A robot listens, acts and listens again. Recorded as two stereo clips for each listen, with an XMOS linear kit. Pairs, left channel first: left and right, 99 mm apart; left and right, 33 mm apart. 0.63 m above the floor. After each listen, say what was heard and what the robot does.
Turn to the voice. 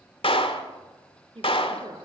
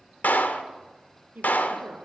The woman speaking: about 65° right or 115° right. Turn 65° right.
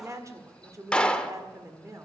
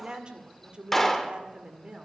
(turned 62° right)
So it is at 35° right. Turn 35° right.
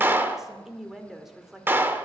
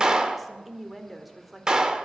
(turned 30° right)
Facing the woman speaking, 1 to 2 m away.